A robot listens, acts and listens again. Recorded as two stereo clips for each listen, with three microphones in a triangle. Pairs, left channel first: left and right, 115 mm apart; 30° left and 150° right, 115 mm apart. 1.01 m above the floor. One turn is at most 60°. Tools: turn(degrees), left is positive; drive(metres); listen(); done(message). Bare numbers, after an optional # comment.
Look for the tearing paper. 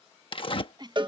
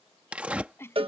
# The tearing paper: 130° left.
turn(60)
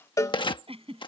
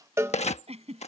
# The tearing paper is now 45° left.
turn(45)
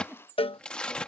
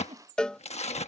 # The tearing paper is now 10° left.
turn(10)
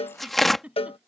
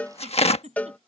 done("Facing the tearing paper.")